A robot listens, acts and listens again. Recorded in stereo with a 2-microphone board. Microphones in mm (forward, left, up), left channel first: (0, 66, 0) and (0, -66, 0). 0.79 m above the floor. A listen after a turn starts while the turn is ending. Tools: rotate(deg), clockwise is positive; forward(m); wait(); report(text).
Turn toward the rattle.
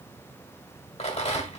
rotate(-50)
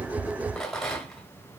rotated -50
report("Facing the rattle, 1 to 2 m away.")